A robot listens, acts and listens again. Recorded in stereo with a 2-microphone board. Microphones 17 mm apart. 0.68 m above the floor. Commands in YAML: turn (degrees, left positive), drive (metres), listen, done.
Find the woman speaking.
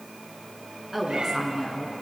turn: -30
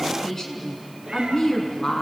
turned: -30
turn: 35
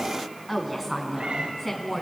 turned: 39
turn: 10
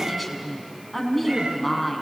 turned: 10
done: "Facing the woman speaking."